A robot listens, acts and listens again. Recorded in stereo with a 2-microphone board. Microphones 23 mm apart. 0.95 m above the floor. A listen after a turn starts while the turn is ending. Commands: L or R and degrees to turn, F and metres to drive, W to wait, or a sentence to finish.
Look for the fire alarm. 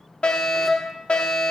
L55
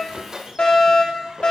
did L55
L60
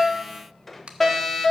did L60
L15
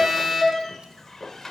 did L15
Facing the fire alarm, 2 to 4 m away.